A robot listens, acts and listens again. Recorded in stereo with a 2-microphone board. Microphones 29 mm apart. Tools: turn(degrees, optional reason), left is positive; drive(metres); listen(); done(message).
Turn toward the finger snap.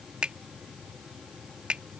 turn(degrees=-45, reason="The finger snap: about 45° right or 135° right.")
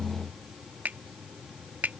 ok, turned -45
turn(degrees=-90, reason="So it is at 90° right.")
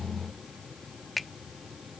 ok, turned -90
done("Facing the finger snap.")